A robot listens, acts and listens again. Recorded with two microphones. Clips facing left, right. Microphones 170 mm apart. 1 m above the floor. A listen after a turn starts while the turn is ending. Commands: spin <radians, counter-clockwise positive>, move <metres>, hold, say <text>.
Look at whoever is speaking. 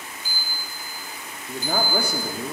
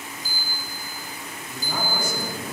spin 1.13
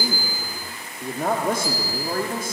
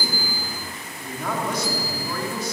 spin 0.87
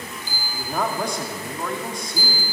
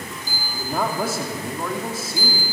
say Found it: a man speaking, straight ahead.